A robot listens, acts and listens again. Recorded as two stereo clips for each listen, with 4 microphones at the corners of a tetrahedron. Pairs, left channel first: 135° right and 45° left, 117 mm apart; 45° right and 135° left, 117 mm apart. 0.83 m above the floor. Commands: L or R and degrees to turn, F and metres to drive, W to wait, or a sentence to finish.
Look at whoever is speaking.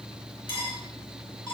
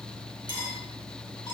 W
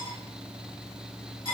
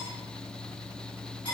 W
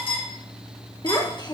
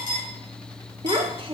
L175
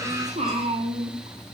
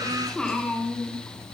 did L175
L40
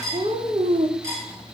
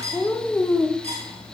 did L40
L15
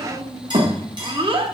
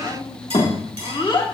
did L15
Found it: a child speaking, straight ahead.